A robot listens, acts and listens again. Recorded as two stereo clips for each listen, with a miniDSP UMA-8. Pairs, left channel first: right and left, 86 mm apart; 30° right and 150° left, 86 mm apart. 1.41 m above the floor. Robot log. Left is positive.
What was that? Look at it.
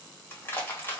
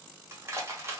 note: The crushing: 155° right.
cmd yaw -155
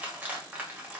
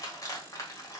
note: The crushing is now 20° left.
cmd yaw +20
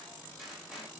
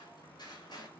end: Facing the crushing, 1 to 2 m away.